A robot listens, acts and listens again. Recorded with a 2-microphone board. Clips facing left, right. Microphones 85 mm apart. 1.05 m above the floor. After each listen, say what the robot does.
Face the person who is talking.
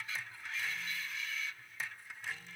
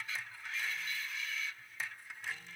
Keep listening.
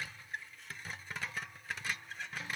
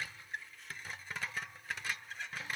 Keep listening.
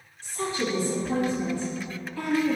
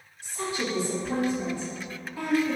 Turn 15° right.
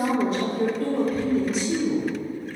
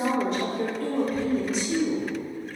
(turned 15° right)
Facing the woman speaking, 1 to 2 m away.